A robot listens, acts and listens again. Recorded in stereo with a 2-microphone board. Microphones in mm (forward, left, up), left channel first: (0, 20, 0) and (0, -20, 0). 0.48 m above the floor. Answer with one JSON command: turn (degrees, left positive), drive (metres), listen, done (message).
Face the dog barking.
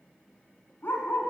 {"turn": 60}
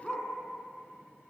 {"done": "Found it: a dog barking, straight ahead."}